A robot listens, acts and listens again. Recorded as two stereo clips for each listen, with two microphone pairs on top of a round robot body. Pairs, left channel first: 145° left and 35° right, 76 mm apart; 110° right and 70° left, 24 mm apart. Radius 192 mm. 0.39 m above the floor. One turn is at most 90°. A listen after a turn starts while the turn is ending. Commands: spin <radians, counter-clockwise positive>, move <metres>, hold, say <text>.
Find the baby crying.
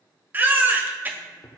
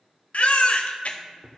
spin -1.57
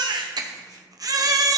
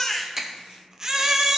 say Facing the baby crying.